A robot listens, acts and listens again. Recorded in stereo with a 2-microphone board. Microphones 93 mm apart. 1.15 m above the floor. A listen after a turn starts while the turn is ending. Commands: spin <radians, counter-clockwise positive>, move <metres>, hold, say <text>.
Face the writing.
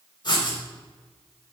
spin 0.96
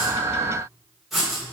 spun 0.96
say Facing the writing, 2 to 4 m away.